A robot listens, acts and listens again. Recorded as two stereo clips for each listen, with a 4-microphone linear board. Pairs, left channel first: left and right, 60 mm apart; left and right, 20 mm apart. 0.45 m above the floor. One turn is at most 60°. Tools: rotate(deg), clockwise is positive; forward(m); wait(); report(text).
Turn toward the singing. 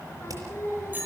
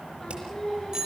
rotate(-50)
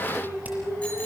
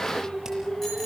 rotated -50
rotate(-60)
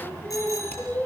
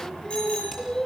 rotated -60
rotate(-30)
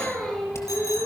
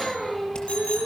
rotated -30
rotate(-10)
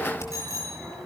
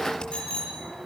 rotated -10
wait()
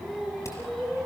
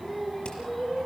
report("Found it: singing, straight ahead, over 4 m away.")